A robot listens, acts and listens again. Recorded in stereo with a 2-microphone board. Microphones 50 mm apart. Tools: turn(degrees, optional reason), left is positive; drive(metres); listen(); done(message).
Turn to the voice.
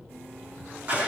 listen()
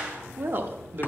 turn(degrees=-45, reason="The woman speaking: about 45° right or 135° right.")
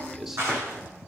listen()
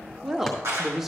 done("Facing the woman speaking.")